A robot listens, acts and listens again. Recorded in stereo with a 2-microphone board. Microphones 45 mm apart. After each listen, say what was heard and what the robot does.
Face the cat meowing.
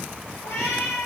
Turn 90° left.
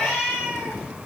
So it is at 15° right. Turn 15° right.
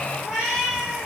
The cat meowing is now 10° right. Turn 10° right.
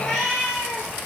The cat meowing is now 10° right. Turn 10° right.
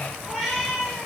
Facing the cat meowing, over 4 m away.